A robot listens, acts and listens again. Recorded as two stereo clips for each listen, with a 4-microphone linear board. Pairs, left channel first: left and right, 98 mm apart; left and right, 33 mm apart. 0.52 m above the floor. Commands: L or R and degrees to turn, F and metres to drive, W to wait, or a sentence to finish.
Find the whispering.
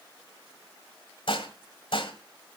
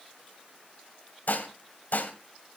W
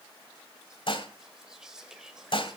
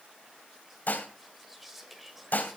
R30
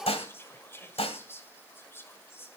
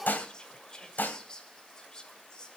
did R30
L25
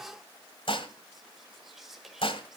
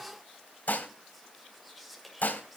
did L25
Found it: whispering, straight ahead, 2 to 4 m away.